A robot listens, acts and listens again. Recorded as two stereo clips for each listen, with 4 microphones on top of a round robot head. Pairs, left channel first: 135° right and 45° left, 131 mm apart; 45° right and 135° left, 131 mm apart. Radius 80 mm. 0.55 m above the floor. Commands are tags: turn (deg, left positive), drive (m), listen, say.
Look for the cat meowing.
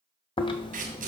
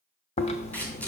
<listen/>
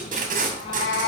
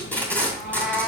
<turn deg="-140"/>
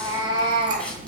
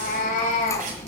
<turn deg="-10"/>
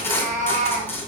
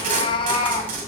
<turn deg="15"/>
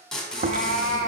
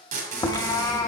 <turn deg="25"/>
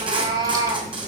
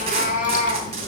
<turn deg="-15"/>
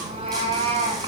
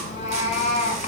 <say>Facing the cat meowing, 1 to 2 m away.</say>